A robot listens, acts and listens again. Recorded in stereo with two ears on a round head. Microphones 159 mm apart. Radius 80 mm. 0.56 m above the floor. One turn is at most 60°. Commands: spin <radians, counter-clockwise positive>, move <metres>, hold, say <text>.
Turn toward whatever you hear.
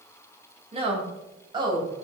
spin -0.44
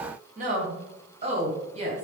spin -0.52
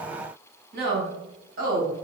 spin -1.05
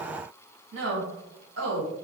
spin -1.05
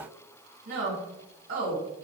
spin -0.79
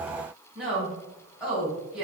say Facing the woman speaking, 2 to 4 m away.